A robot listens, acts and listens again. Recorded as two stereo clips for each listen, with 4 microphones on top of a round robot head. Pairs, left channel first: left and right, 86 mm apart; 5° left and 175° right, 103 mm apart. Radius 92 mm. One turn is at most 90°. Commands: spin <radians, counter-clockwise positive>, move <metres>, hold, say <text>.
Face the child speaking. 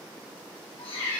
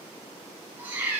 hold
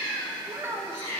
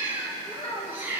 spin -0.61
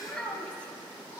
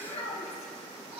spin 0.26
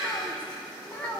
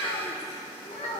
spin 0.35
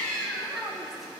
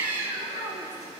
say Found it: a child speaking, straight ahead.